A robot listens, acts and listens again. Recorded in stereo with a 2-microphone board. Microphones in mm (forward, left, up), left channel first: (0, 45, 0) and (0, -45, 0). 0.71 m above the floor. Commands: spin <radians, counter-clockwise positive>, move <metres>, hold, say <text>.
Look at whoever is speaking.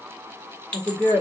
spin -0.52
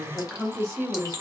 say Facing the woman speaking, 1 to 2 m away.